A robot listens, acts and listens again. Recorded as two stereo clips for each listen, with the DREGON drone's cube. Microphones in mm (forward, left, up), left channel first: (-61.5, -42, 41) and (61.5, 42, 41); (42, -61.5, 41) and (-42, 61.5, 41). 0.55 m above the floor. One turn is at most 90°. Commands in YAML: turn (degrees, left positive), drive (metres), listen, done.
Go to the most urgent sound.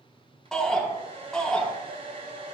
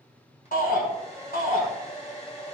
turn: -60
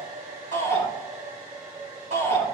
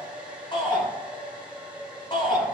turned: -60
drive: 1.0
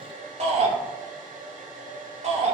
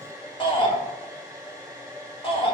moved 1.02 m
drive: 1.0
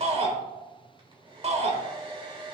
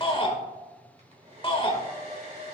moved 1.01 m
drive: 1.0
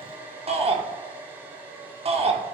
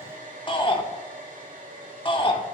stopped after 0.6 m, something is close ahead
done: "Arrived at the shout, straight ahead."